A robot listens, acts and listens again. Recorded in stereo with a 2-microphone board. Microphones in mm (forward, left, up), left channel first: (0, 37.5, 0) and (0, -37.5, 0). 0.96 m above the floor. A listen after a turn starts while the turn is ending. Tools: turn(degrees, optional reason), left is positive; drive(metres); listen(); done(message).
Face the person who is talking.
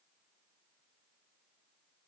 listen()
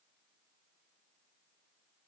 listen()
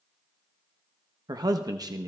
turn(degrees=-60, reason="The man speaking: about 60° right or 120° right.")
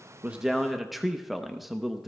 done("Found it: a man speaking, straight ahead.")